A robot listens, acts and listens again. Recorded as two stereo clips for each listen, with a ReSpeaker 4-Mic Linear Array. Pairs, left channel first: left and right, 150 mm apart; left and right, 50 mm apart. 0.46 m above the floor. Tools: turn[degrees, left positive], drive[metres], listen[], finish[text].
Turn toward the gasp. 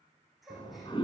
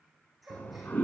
Action: turn[30]
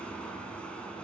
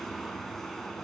Action: listen[]
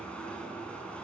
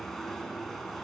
Action: finish[I heard a gasp, but can't make it out now. It was about 30° right or 150° left.]